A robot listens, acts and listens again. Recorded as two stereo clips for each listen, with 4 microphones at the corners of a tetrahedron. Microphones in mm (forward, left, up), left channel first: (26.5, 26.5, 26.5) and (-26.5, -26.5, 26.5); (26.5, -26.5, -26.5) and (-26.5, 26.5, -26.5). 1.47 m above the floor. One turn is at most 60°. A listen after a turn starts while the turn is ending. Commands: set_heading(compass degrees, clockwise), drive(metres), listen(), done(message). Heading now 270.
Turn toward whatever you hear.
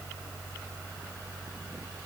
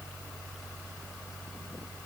listen()
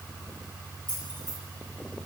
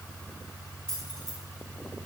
set_heading(230)
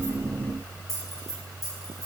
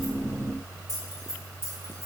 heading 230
set_heading(220)
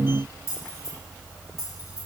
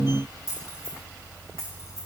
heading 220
done("Facing the keys jangling, 2 to 4 m away.")